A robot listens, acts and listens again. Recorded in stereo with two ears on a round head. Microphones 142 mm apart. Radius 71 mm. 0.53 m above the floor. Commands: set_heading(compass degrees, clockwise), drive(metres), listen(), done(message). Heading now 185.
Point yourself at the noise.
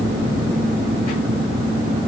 listen()
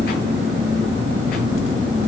listen()
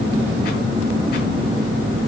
done("I can't make out anything.")